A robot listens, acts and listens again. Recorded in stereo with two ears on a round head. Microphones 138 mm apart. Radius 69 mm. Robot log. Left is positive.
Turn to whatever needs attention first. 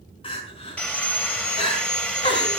note: The crying: about 35° left or 145° left.
cmd yaw +35
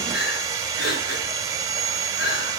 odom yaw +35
note: So it is at 110° left.
cmd yaw +110
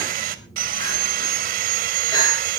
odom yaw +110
cmd idle
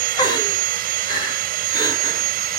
note: The crying is now 30° left.
cmd yaw +30
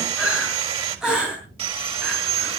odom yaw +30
end: Facing the crying, over 4 m away.